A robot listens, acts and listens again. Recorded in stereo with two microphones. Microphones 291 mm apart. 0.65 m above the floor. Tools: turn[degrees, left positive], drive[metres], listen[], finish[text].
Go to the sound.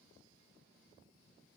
Action: listen[]
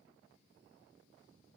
Action: listen[]
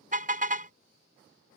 Thought: The car horn: about 30° right or 150° right.
Action: turn[-30]
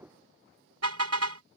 Thought: So it is at 120° right.
Action: turn[-120]
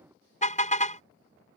Thought: The car horn is now 25° left.
Action: turn[25]
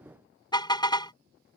Thought: The car horn is now 15° left.
Action: turn[15]
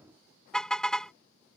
Action: drive[1.0]
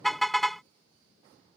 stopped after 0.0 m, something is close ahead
Action: finish[Something is in my way. I am facing the car horn but have not reached it.]